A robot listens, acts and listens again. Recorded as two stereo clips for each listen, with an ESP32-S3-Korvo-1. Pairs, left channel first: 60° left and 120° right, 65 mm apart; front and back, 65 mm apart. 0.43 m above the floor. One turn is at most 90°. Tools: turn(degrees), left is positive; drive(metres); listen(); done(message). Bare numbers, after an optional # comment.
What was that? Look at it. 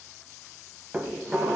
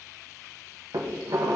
# The dishes clattering: 170° left.
turn(90)
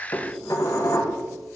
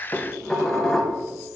# The dishes clattering is now 80° left.
turn(80)
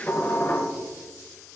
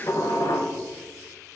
# The dishes clattering is now 15° left.
turn(15)
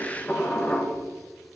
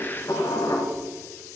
done("Found it: dishes clattering, straight ahead.")